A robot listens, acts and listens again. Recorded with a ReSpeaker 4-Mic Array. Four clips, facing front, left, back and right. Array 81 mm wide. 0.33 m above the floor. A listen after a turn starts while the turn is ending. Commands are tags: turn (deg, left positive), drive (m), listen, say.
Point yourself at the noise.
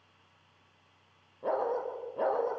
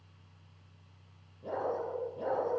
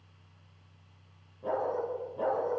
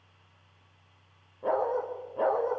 <turn deg="-65"/>
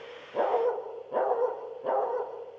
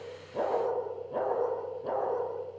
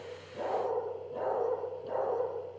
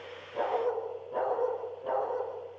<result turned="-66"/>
<say>Facing the dog barking, over 4 m away.</say>